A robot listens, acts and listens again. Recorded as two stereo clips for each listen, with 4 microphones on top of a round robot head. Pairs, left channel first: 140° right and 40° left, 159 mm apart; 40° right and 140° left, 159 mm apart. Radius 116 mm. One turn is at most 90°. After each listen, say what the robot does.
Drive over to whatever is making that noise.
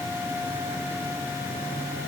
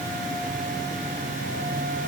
Keep listening.
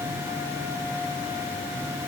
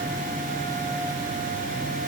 Keep listening.
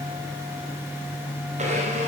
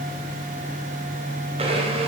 Turn 85° left.
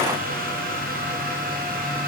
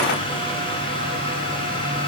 Turn 15° left.
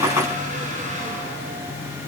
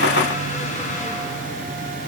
Keep listening.
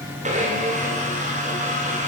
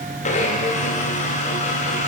Drive 1.0 m forward.
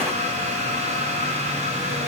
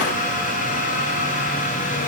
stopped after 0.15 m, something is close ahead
Something is in my way. I am facing the blender but have not reached it.